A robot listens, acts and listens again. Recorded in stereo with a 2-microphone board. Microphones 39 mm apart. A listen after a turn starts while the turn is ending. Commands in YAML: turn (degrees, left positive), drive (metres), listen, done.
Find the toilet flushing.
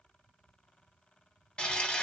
turn: 30
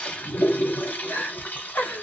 turn: 115
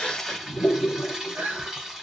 turn: -15
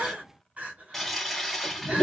done: "Found it: a toilet flushing, straight ahead."